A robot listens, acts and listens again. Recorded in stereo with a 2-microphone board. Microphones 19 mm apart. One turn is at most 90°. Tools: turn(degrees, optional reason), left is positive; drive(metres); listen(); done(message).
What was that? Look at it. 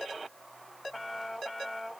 listen()
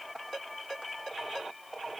listen()
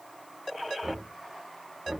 turn(degrees=-25, reason="The knocking: about 25° right or 155° right.")
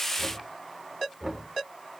done("Facing the knocking, 2 to 4 m away.")